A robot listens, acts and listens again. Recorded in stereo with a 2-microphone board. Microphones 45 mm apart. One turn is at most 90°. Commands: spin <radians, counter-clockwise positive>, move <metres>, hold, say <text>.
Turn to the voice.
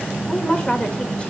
spin 0.35
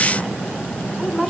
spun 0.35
say Facing the woman speaking, 1 to 2 m away.